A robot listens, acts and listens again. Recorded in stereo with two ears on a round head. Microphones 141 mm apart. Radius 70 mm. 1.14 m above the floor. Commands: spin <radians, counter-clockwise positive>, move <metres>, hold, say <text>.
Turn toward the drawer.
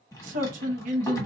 spin 0.35
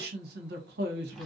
hold
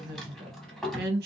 say Found it: a drawer, straight ahead, 1 to 2 m away.